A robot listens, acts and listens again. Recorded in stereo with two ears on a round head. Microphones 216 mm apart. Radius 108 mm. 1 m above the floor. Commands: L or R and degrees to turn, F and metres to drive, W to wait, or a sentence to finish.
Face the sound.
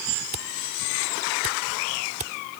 R30
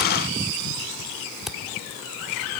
Found it: a camera shutter, straight ahead.